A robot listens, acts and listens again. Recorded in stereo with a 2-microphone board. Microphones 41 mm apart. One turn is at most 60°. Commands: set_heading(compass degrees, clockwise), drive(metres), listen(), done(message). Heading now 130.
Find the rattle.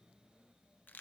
listen()
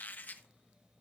listen()
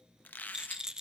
set_heading(145)
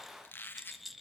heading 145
done("Facing the rattle, under 1 m away.")